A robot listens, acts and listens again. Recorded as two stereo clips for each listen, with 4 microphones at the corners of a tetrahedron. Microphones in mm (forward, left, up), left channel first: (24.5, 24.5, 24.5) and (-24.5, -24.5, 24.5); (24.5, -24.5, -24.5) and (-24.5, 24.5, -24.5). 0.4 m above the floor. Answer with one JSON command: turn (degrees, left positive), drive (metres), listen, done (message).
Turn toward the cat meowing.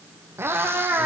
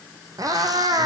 {"turn": 165}
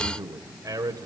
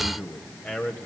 {"listen": true}
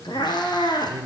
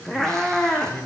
{"turn": 35}
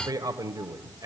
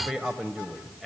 {"listen": true}
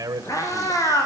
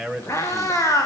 {"done": "Found it: a cat meowing, straight ahead."}